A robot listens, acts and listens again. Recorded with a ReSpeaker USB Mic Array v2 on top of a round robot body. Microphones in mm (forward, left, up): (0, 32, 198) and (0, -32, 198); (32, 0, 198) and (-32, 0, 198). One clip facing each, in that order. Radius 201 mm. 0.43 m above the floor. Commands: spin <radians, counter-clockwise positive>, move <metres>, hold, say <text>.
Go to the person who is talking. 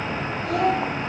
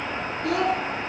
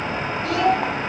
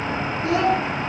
spin -2.01
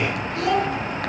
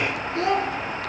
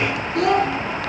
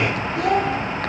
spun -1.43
spin -0.52
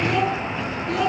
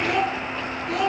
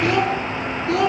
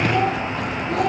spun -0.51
move 1.0
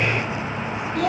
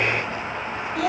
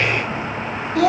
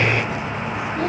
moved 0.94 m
move 1.0
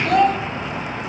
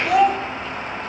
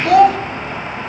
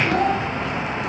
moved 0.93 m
move 1.0
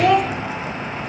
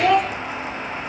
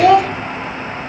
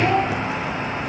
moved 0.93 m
move 1.0
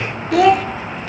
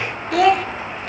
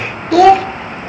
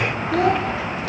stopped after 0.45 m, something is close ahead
say I am next to the child speaking.